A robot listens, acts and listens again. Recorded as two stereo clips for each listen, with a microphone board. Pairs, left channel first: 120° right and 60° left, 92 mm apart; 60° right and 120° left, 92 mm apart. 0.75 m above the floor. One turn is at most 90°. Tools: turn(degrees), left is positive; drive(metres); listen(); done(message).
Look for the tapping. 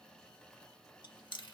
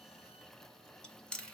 listen()
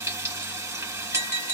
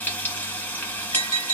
turn(degrees=-60)
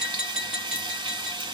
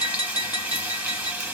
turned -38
turn(degrees=-20)
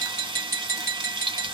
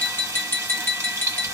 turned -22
done("Facing the tapping.")